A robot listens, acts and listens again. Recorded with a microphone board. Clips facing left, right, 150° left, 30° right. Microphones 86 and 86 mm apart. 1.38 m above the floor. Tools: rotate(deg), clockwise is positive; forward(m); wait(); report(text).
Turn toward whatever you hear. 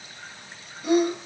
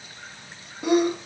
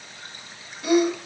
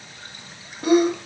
rotate(85)
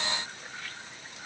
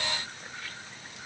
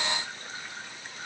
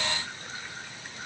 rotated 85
report("I heard a sneeze from this way, but can't make it out now.")